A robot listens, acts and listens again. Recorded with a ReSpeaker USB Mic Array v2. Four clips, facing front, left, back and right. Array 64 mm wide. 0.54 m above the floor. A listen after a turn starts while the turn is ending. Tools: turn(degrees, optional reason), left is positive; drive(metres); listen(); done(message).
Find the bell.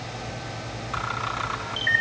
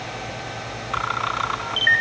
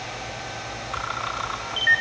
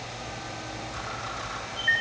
listen()
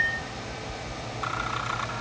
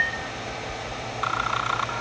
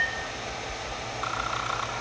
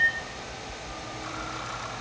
listen()
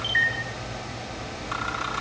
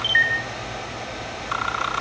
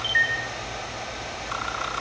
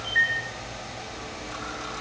done("I can't make out a bell, only a camera shutter.")